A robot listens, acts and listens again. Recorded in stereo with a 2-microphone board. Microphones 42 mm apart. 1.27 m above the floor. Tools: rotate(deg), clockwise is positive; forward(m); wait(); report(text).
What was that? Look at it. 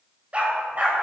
rotate(35)
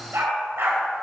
rotate(105)
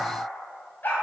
rotate(-50)
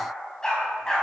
rotate(-15)
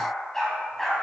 report("Facing the dog barking.")